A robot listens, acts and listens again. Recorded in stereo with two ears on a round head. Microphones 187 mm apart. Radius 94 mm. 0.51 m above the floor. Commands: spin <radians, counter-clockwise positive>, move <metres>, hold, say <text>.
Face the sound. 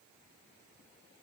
hold
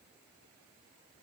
hold
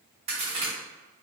spin -0.52
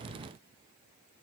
hold
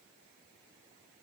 say I heard a crack, but can't make it out now. It was about straight ahead or 120° right.